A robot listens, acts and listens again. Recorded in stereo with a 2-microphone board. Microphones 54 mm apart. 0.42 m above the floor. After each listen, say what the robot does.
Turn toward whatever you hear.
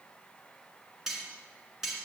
Turn 30° right.
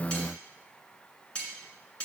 Turn 20° left.
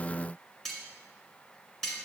Facing the cutlery clinking, 2 to 4 m away.